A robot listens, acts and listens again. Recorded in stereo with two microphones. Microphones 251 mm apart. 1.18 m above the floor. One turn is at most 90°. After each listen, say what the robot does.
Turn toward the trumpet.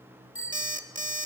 Keep listening.
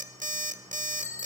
Keep listening.
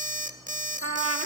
Turn 65° right.
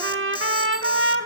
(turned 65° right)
Turn 55° right.
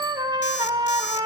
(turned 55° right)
Turn 15° right.
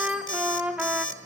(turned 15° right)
Found it: a trumpet, straight ahead.